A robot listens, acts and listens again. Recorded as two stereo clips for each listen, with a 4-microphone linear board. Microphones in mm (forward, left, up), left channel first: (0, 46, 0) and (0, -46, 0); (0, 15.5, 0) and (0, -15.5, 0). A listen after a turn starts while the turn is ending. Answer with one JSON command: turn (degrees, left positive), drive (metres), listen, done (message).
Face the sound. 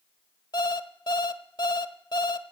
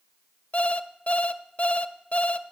{"turn": 55}
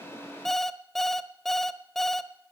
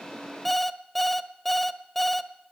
{"done": "Facing the alarm clock."}